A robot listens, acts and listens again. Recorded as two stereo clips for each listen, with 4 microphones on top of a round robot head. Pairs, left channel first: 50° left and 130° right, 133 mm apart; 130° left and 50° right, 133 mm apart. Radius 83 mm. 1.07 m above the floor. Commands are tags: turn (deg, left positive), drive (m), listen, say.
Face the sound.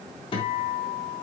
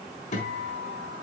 <turn deg="100"/>
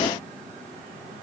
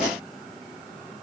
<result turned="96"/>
<listen/>
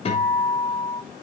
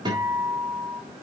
<turn deg="10"/>
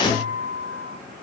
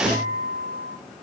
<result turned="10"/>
<say>Facing the guitar, 2 to 4 m away.</say>